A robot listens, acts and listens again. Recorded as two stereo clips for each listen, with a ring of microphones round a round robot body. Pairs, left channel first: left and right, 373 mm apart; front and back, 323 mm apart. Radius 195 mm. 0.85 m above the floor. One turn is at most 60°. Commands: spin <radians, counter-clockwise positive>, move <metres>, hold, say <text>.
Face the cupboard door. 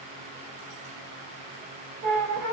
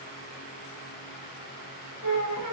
hold
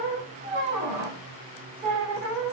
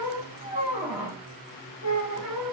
hold
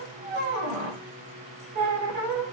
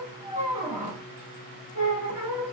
say I can't make out a cupboard door, only a squeak.